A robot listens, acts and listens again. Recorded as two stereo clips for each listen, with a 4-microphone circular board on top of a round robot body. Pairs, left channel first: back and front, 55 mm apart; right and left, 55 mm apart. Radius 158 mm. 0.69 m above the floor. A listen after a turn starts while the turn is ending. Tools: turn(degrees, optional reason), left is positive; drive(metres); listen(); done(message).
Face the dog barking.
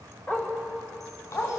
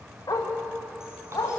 turn(degrees=-125, reason="The dog barking: 125° right.")
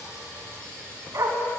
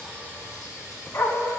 turn(degrees=-40, reason="The dog barking is now 40° right.")
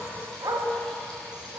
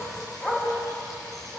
turn(degrees=-25, reason="The dog barking is now 25° right.")
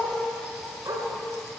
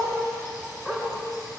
turn(degrees=-10, reason="The dog barking is now 10° right.")
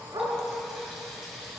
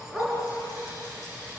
done("Facing the dog barking.")